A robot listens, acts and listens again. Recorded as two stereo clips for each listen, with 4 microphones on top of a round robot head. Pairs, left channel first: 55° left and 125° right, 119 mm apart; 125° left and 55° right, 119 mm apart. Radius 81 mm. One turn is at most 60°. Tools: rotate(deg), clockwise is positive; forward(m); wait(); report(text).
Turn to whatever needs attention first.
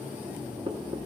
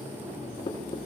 wait()
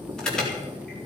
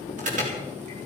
rotate(30)
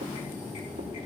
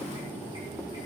wait()
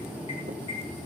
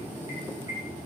wait()
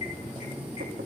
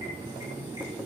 report("Facing where the alarm came from. I can't hear it now.")